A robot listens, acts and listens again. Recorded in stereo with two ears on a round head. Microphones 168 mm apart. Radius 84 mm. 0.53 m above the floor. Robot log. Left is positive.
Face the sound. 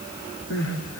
cmd yaw +90
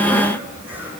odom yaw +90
cmd idle
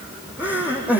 note: The crying is now 10° right.
cmd yaw -10
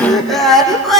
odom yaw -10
end: Found it: crying, straight ahead.